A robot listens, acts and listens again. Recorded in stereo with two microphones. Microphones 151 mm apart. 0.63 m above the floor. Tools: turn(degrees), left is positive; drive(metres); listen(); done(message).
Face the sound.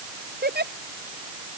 turn(degrees=-90)
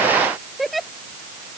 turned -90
done("Found it: a giggle, straight ahead.")